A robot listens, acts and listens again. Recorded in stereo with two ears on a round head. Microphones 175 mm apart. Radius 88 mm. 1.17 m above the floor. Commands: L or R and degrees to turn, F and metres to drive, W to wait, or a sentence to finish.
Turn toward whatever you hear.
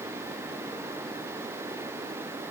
W
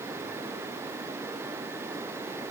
W
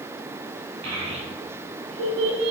R90
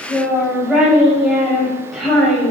Facing the child speaking, over 4 m away.